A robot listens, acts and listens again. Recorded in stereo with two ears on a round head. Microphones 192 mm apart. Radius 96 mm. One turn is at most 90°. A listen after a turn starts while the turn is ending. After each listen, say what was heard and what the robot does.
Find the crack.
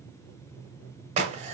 The crack: about 30° right or 150° right. Turn 30° right.
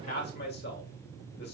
Keep listening.
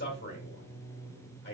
I heard a crack, but can't make it out now. It was about straight ahead or 120° right.